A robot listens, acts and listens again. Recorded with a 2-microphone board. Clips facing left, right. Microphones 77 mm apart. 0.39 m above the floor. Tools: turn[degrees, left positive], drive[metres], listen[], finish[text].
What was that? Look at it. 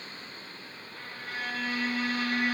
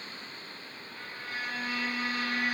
Thought: The violin: about 60° left or 120° left.
Action: turn[60]
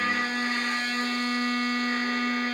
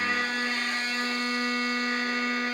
Thought: So it is at 60° left.
Action: turn[60]
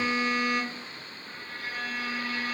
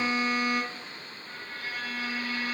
Thought: The violin is now 30° left.
Action: turn[30]
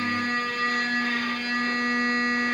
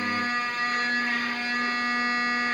Thought: The violin is now 10° right.
Action: turn[-10]
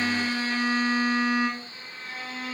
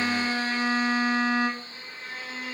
Action: finish[Found it: a violin, straight ahead, 1 to 2 m away.]